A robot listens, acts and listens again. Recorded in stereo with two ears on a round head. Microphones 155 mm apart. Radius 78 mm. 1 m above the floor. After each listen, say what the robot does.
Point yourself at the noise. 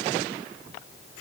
Keep listening.
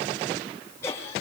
Turn 15° left.
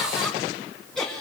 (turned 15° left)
Turn 30° left.
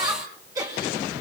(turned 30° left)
Turn 20° right.
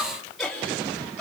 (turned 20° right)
Found it: laughter, straight ahead.